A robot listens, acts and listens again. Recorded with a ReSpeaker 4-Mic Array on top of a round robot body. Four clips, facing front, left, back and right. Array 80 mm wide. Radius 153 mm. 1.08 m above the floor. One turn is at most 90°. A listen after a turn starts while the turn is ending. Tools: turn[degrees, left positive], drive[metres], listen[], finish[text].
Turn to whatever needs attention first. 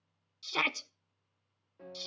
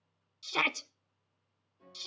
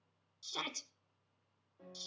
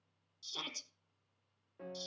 Thought: The shout: 55° left.
Action: turn[55]
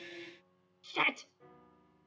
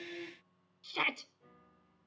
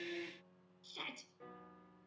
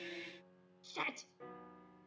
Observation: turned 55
Thought: The shout is now 20° left.
Action: turn[20]
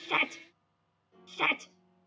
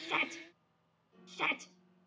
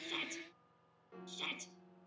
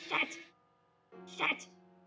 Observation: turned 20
Action: finish[Facing the shout, under 1 m away.]